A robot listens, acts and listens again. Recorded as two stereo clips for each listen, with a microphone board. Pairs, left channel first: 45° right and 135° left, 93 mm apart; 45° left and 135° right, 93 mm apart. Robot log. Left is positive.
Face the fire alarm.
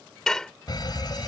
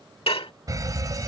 note: The fire alarm: 85° right.
cmd yaw -85
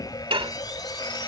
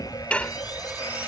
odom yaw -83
end: Facing the fire alarm.